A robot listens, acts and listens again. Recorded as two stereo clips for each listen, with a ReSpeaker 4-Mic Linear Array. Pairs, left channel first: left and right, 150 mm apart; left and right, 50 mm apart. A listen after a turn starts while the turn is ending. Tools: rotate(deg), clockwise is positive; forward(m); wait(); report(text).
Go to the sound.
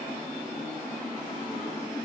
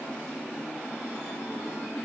wait()
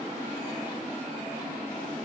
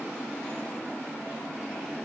wait()
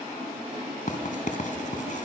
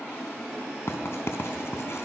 rotate(-60)
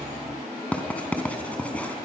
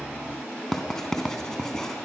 rotate(-10)
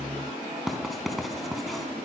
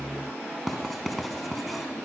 forward(1.0)
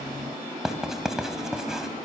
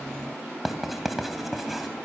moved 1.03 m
forward(1.0)
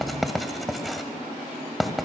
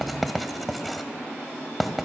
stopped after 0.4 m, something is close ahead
report("I am next to the writing.")